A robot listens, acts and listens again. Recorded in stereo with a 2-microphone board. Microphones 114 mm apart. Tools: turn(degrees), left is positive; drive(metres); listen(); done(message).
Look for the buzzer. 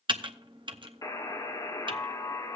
turn(degrees=30)
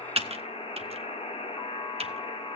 turn(degrees=120)
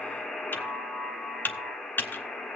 done("Found it: a buzzer, straight ahead, 1 to 2 m away.")